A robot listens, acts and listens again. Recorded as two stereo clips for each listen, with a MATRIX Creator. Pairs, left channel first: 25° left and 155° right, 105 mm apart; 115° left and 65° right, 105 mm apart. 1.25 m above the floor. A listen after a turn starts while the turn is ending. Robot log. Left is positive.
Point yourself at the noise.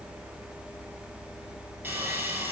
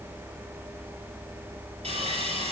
note: The sawing: 90° right.
cmd yaw -90
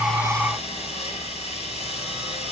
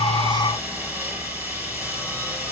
end: Facing the sawing.